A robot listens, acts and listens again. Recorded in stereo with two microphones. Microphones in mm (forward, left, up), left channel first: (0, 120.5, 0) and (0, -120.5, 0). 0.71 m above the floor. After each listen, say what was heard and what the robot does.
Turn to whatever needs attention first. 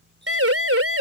The siren: about 65° right or 115° right. Turn 65° right.
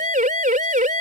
So it is at 35° right. Turn 35° right.
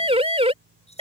The siren is now 25° right. Turn 25° right.
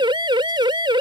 The siren is now 20° right. Turn 20° right.
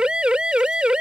Facing the siren.